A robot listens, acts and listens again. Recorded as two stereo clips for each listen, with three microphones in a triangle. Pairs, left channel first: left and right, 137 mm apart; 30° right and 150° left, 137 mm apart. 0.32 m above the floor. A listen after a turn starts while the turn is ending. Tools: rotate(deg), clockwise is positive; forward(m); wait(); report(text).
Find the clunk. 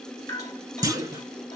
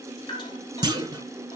rotate(150)
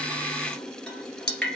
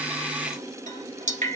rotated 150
report("Facing where the clunk came from. I can't hear it now.")